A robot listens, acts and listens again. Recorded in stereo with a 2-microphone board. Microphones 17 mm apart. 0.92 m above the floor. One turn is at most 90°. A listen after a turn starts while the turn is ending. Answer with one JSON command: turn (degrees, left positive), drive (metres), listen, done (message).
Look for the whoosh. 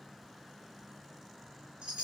{"listen": true}
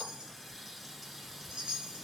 {"listen": true}
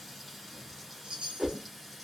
{"turn": -40}
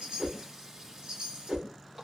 {"turn": -90}
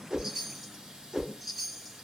{"turn": -40}
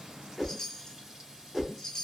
{"done": "Found it: a whoosh, straight ahead."}